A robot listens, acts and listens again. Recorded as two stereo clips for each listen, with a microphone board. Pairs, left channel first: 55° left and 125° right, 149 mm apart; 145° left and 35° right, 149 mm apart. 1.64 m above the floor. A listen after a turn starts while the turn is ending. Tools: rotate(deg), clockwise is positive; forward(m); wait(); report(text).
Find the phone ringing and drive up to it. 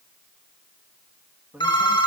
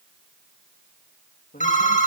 rotate(-115)
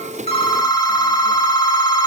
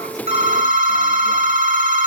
forward(1.0)
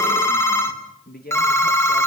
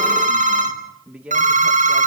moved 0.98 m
rotate(15)
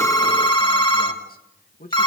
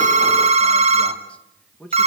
forward(1.0)
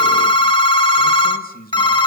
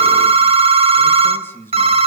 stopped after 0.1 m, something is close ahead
report("I am next to the phone ringing.")